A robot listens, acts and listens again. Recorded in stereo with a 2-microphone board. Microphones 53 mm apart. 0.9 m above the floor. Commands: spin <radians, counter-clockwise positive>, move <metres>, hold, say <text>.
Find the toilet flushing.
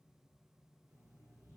hold
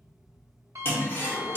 spin 0.70
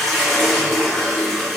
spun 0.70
say Found it: a toilet flushing, straight ahead, under 1 m away.